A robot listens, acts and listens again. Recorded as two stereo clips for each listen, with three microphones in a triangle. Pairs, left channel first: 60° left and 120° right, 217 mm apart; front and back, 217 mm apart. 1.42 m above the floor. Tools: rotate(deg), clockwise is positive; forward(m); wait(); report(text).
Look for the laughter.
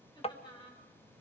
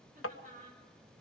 rotate(-130)
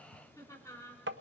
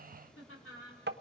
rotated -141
rotate(15)
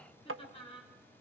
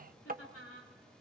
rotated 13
report("Facing the laughter.")